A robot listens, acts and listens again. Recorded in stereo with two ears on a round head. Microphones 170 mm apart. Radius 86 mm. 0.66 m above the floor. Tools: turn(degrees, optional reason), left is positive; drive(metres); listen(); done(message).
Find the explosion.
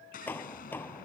turn(degrees=45, reason="The explosion: about 45° left or 135° left.")
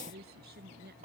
listen()
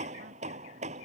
done("I heard an explosion, but can't make it out now. It was about straight ahead or 90° left.")